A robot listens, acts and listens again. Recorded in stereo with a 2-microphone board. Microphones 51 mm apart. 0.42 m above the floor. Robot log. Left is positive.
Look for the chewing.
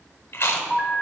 note: The chewing: about 60° left or 120° left.
cmd yaw +60
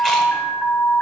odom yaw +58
cmd idle
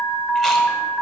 cmd idle
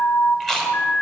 note: So it is at 10° left.
cmd yaw +10
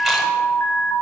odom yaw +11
cmd idle
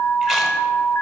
cmd idle
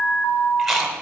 end: Found it: chewing, straight ahead, 1 to 2 m away.